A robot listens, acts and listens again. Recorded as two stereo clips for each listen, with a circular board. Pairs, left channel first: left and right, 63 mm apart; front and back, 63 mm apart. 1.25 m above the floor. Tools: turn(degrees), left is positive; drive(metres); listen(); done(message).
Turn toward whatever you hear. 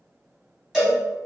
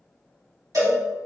turn(degrees=-170)
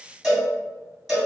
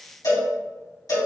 done("Found it: a cowbell, straight ahead.")